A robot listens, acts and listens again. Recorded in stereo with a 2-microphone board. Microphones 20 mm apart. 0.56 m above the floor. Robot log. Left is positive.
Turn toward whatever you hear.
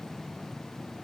cmd idle
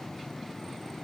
cmd idle
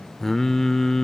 note: The singing: about 25° left or 155° left.
cmd yaw +25
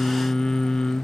note: So it is at 125° left.
cmd yaw +125
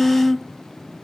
end: Facing the singing, under 1 m away.